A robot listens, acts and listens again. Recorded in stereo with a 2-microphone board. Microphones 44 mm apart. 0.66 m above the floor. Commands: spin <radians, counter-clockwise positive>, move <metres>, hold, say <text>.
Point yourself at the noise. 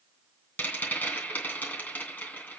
spin 0.70
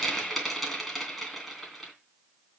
say Found it: a rattle, straight ahead, 2 to 4 m away.